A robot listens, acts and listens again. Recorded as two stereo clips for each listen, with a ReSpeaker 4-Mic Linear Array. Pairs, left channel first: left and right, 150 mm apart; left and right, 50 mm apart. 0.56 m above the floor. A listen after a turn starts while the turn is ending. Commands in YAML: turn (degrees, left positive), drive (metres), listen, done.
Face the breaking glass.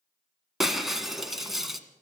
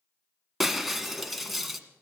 turn: 30
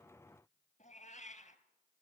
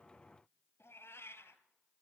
listen: true
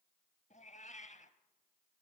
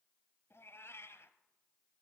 done: "I heard breaking glass, but can't make it out now. It was about 30° right or 150° left."